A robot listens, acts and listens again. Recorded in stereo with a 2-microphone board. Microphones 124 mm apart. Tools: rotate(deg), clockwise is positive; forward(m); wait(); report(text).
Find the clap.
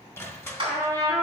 rotate(45)
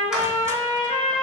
wait()
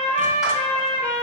wait()
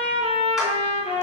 report("I heard a clap, but can't make it out now. It was about straight ahead or 90° right.")